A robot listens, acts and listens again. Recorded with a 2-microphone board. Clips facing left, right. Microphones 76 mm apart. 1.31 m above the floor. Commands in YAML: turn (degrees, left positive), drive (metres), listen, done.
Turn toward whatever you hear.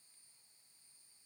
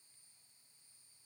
listen: true
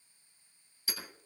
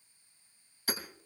turn: -50
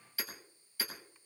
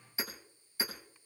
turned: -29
turn: -20
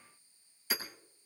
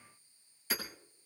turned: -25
done: "Found it: hammering, straight ahead."